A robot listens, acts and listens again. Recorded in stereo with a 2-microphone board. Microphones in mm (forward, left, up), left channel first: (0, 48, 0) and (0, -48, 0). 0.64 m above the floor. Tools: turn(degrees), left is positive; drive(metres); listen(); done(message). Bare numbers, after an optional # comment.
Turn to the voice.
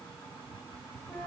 listen()
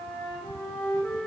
listen()
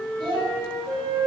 # The child speaking: about 55° right or 125° right.
turn(-55)
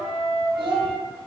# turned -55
# So it is at 65° right.
turn(-65)
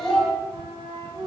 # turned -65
done("Facing the child speaking, 2 to 4 m away.")